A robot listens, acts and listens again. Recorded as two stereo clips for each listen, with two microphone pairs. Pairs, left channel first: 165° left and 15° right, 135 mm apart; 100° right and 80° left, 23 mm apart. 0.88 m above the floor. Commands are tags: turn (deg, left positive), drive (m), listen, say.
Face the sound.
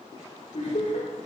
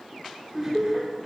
<turn deg="150"/>
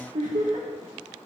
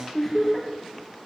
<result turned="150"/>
<turn deg="-15"/>
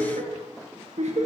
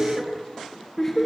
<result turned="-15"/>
<turn deg="-25"/>
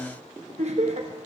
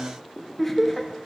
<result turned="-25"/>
<turn deg="-20"/>
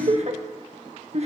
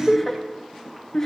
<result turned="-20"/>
<turn deg="-30"/>
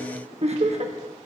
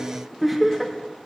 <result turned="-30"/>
<say>Found it: laughter, straight ahead, 1 to 2 m away.</say>